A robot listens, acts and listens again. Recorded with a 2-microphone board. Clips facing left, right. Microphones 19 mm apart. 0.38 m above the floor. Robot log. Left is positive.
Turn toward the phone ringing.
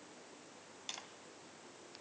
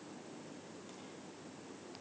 cmd idle
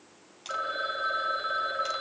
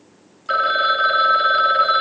note: The phone ringing: about 55° right or 125° right.
cmd yaw -55
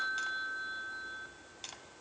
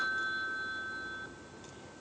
note: So it is at 10° right.
cmd yaw -10
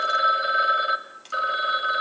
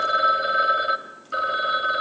end: Found it: a phone ringing, straight ahead.